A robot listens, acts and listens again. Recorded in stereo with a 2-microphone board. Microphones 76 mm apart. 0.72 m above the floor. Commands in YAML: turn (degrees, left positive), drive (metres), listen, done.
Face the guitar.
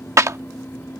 listen: true
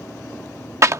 listen: true
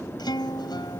turn: 75
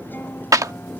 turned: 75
listen: true
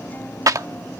listen: true
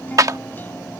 done: "I heard a guitar, but can't make it out now. It was about straight ahead or 30° left."